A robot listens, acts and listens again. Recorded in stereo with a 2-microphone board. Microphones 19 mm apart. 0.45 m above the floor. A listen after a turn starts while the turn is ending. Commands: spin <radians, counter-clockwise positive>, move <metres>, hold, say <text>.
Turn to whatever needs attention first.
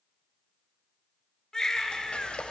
spin 0.52
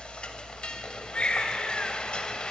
spin 2.09
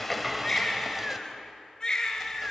spin 0.61
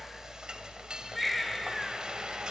say Found it: a baby crying, straight ahead.